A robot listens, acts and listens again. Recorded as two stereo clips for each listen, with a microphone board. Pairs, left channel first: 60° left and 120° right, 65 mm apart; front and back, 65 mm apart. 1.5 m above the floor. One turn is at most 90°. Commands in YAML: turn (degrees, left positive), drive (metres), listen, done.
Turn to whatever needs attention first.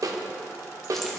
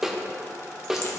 listen: true
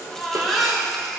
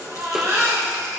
turn: 90
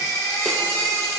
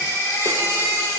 turn: 35
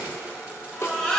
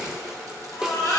turn: -15
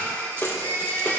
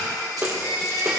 done: "Found it: a baby crying, straight ahead."